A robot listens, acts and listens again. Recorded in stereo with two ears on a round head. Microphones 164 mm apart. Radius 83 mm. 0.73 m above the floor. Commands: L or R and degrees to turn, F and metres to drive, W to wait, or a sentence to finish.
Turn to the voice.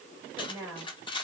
R30
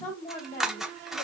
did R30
L15
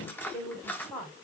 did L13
Found it: a woman speaking, straight ahead.